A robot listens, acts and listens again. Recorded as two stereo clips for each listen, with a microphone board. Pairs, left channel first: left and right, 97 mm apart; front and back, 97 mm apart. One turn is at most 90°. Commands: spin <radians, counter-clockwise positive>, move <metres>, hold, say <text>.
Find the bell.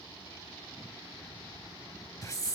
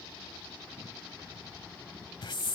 hold
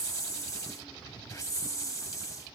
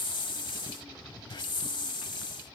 hold
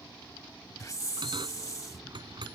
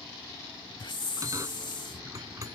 spin -1.57
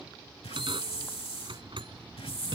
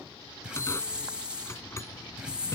spin -1.05
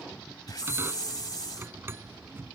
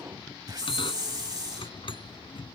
spin -0.44
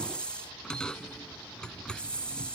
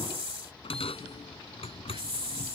spin 0.17
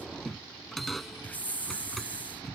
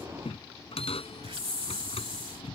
say Facing the bell.